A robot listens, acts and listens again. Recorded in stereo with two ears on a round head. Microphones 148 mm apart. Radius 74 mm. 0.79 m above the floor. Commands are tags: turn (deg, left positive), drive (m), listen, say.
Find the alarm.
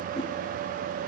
<listen/>
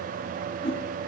<listen/>
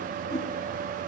<say>I can't make out an alarm to turn to.</say>